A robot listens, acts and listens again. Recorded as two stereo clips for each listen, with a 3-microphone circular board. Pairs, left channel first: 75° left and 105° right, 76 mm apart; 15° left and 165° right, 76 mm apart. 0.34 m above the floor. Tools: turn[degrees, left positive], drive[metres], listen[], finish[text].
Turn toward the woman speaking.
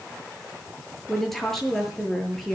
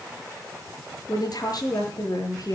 Thought: The woman speaking: 10° right.
Action: turn[-10]
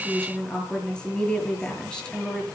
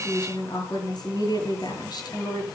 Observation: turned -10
Action: finish[Found it: a woman speaking, straight ahead, over 4 m away.]